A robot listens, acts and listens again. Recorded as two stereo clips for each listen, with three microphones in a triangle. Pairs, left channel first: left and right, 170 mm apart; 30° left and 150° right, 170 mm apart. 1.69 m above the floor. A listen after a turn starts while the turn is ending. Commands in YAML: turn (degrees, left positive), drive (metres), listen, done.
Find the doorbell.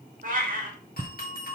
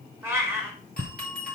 turn: 60
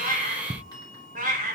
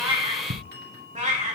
turn: 25
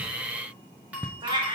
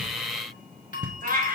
turn: -10
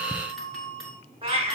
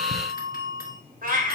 done: "Found it: a doorbell, straight ahead, 2 to 4 m away."